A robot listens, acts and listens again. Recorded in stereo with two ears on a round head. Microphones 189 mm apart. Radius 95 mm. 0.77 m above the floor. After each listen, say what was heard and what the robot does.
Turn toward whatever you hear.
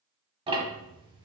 The ticking: about 25° right or 155° right. Turn 25° right.
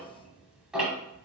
Facing the ticking, 1 to 2 m away.